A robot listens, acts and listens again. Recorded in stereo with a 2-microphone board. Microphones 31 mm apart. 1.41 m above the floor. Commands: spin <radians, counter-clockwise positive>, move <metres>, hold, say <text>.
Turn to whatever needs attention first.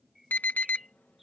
spin 1.31
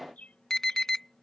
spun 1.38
spin 0.26
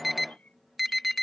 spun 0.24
say Facing the alarm.